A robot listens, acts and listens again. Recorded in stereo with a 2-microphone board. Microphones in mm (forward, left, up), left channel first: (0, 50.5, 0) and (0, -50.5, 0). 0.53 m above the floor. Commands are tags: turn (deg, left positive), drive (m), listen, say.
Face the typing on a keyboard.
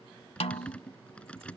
<turn deg="30"/>
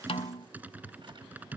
<turn deg="-15"/>
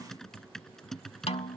<say>Found it: typing on a keyboard, straight ahead.</say>